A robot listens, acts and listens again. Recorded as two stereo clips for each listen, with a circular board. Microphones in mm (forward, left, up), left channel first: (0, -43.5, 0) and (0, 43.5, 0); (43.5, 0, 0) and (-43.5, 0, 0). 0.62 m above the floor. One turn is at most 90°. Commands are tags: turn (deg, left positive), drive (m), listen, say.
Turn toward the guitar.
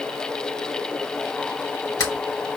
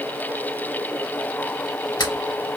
<listen/>
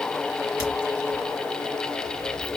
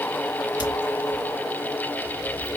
<listen/>
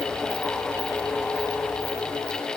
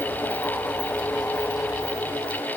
<say>I can't make out a guitar to turn to.</say>